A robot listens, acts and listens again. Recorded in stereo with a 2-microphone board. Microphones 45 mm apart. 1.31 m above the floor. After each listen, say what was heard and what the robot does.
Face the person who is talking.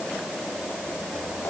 Keep listening.
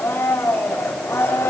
Keep listening.
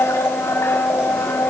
I can't make out anyone speaking to turn to.